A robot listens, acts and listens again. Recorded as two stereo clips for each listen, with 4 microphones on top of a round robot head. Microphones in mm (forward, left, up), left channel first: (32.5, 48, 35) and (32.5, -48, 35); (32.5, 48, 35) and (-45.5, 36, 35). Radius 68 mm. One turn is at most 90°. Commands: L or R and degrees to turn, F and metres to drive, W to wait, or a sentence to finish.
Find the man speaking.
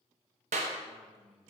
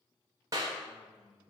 R10
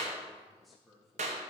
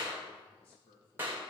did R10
Found it: a man speaking, straight ahead, 2 to 4 m away.